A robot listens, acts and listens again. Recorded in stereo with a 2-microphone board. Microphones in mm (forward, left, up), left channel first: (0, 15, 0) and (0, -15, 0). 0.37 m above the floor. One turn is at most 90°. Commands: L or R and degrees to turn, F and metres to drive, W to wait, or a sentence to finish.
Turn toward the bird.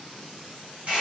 W
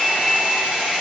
W
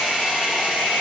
I can't make out a bird, only a hair dryer.